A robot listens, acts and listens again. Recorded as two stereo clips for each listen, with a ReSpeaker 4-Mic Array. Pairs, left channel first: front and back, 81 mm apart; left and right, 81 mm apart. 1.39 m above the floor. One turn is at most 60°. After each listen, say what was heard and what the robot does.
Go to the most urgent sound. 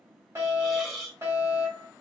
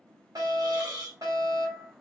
The fire alarm: 125° right. Turn 60° right.
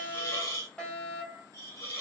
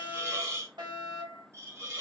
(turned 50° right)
The fire alarm is now 75° right. Turn 60° right.
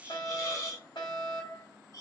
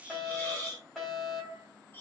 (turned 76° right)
Drive 1.0 m forward.
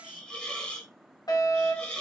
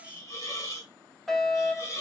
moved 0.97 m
Drive 1.0 m forward.
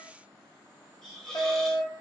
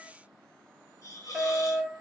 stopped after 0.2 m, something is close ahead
I am next to the fire alarm.